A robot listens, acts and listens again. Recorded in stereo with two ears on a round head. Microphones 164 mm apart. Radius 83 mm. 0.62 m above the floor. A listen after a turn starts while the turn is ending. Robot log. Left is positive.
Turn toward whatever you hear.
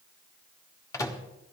note: The microwave: about 20° left or 160° left.
cmd yaw +20
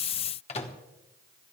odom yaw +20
note: So it is at 140° left.
cmd yaw +140
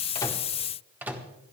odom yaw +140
note: The microwave is now 10° right.
cmd yaw -10
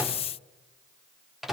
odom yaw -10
end: Found it: a microwave, straight ahead, 1 to 2 m away.